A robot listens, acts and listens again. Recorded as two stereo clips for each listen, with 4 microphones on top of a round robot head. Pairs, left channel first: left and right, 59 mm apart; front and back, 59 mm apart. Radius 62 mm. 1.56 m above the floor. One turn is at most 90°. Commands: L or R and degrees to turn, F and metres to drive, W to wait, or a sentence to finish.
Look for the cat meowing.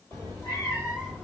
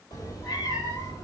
Found it: a cat meowing, straight ahead, 1 to 2 m away.